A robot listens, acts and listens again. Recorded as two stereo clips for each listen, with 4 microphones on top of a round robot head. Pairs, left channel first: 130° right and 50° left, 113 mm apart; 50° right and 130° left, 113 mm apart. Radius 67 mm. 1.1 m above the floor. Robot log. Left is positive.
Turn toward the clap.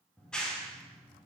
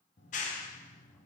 note: The clap: 50° right.
cmd yaw -50
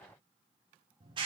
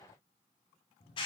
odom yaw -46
end: Facing the clap.